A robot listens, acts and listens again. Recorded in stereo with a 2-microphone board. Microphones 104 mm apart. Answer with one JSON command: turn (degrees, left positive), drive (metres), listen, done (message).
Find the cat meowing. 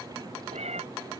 {"turn": -90}
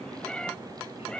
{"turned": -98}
{"turn": 10}
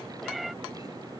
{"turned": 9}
{"done": "Found it: a cat meowing, straight ahead."}